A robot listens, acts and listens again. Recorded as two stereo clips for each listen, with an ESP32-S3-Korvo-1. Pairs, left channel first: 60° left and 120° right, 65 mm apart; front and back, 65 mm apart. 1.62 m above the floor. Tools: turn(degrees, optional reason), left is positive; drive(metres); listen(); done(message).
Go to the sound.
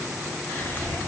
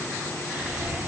turn(degrees=110, reason="The whispering: 110° left.")
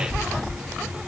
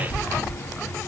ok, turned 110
turn(degrees=-30, reason="The whispering is now 30° right.")
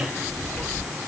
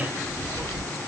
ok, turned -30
turn(degrees=-10, reason="The whispering is now 10° right.")
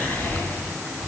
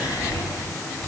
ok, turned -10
drive(metres=1.0)
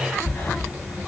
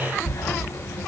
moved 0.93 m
turn(degrees=10, reason="The whispering is now 10° left.")
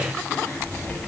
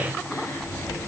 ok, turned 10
drive(metres=1.0)
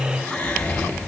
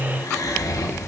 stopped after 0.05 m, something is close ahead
turn(degrees=-10, reason="The whispering is now 10° right.")
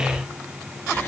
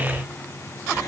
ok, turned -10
done("Arrived at the whispering, straight ahead.")